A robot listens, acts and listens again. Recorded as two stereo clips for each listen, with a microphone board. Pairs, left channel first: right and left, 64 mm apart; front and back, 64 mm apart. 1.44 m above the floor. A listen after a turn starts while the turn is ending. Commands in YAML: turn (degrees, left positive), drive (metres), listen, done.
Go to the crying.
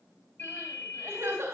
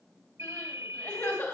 turn: 40
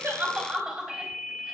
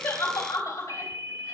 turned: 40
drive: 1.0
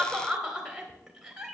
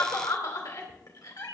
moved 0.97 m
turn: 10
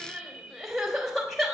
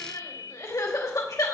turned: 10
drive: 1.0
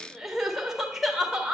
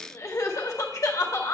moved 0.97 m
drive: 1.0
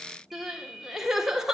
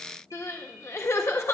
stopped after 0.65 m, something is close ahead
turn: 10
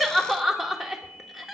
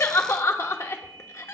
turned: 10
done: "Arrived at the crying, straight ahead."